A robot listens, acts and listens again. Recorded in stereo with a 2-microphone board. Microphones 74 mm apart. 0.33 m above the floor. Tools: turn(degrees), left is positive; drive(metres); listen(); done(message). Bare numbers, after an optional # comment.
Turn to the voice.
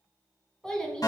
turn(30)
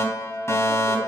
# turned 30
listen()
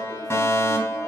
listen()
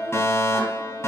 done("I heard a child speaking, but can't make it out now. It was about 20° right or 140° left.")